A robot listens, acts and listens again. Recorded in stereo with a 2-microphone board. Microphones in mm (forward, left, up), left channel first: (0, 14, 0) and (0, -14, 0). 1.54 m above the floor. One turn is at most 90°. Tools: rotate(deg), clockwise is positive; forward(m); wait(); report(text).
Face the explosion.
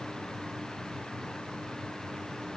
wait()
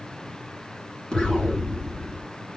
rotate(-30)
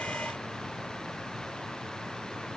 wait()
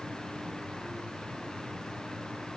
report("I heard an explosion, but can't make it out now. It was about straight ahead or 120° left.")